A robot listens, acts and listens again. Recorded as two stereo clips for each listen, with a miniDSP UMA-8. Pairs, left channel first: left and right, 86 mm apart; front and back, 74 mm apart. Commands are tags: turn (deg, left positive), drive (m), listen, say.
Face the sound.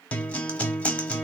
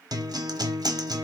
<turn deg="165"/>
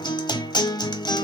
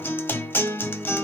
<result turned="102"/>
<turn deg="60"/>
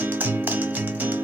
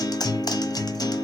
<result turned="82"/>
<turn deg="-20"/>
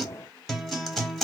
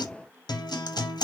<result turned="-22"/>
<say>Facing the guitar, under 1 m away.</say>